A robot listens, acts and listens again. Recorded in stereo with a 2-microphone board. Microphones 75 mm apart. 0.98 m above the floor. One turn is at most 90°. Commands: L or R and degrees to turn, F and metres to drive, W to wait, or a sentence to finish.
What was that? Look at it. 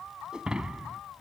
R30
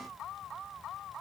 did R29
W
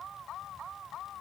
I heard breaking glass, but can't make it out now. It was about 20° left or 140° right.